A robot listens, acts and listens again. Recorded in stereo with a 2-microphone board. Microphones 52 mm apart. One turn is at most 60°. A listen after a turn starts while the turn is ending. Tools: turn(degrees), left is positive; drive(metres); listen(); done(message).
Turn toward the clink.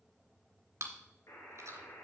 listen()
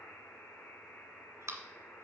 listen()
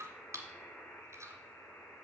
done("I can't make out a clink to turn to.")